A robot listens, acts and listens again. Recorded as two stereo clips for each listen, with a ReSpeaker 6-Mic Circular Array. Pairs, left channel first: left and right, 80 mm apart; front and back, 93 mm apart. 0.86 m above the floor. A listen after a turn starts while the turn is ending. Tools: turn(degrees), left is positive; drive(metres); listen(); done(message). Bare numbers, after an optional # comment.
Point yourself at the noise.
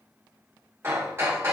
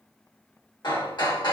# The hammering: 30° right.
turn(-30)
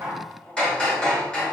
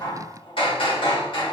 # The hammering is now 10° left.
turn(10)
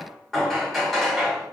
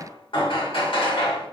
done("Facing the hammering, 1 to 2 m away.")